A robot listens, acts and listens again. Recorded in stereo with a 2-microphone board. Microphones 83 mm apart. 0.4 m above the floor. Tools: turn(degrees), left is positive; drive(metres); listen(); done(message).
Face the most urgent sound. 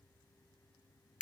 listen()
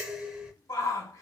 turn(degrees=40)
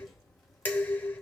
listen()
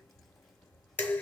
listen()
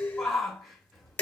done("Found it: a shout, straight ahead.")